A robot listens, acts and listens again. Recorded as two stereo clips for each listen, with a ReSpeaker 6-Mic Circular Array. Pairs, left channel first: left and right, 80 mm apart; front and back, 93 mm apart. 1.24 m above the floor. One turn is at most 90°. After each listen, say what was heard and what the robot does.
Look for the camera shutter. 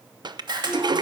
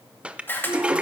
The camera shutter: 65° right. Turn 65° right.
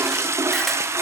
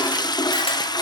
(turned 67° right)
Keep listening.
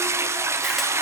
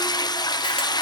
Keep listening.
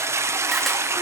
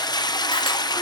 I heard a camera shutter from this way, but can't make it out now.